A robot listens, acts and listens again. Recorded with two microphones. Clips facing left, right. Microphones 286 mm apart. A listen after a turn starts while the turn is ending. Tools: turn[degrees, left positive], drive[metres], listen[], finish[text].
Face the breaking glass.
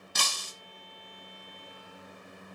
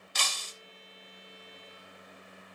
Thought: The breaking glass: about 50° left or 130° left.
Action: turn[50]
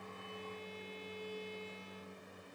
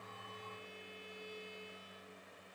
Action: listen[]
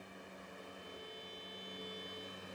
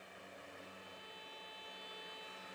Action: finish[I heard breaking glass, but can't make it out now. It was about straight ahead or 80° left.]